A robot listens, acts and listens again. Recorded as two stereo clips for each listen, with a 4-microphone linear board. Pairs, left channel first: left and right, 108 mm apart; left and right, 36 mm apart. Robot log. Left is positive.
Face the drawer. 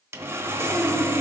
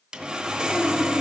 cmd idle
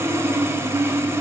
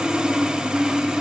cmd idle
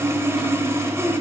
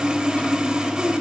end: I can't make out a drawer, only sawing.